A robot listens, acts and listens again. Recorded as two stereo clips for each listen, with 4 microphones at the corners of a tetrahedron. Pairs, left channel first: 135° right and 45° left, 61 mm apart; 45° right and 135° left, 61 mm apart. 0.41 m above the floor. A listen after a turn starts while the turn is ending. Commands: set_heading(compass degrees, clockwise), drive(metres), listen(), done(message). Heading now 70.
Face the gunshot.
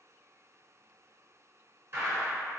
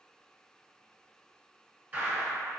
set_heading(355)
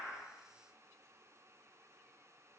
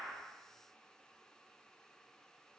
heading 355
done("Facing where the gunshot came from. I can't hear it now.")